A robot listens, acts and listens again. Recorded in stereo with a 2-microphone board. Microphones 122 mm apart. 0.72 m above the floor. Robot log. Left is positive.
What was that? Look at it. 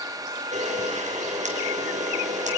cmd yaw -90
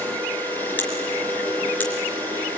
note: So it is at 10° left.
cmd yaw +10
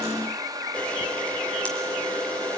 note: The camera shutter is now 10° left.
cmd yaw +10
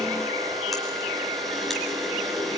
end: Facing the camera shutter, 2 to 4 m away.